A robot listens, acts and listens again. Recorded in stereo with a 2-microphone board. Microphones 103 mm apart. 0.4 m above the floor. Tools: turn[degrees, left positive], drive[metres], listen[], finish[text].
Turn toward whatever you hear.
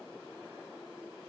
Action: listen[]
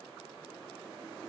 Action: listen[]
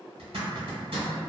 Thought: The zipper: about 65° right or 115° right.
Action: turn[-65]
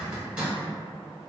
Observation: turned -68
Thought: So it is at 15° right.
Action: turn[-15]
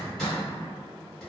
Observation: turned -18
Action: finish[Found it: a zipper, straight ahead, 1 to 2 m away.]